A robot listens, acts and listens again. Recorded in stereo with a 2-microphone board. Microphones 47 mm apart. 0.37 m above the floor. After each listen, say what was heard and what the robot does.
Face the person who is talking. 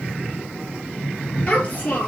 The child speaking: about 30° left or 150° left. Turn 30° left.
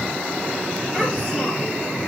Keep listening.
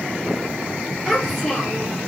Found it: a child speaking, straight ahead.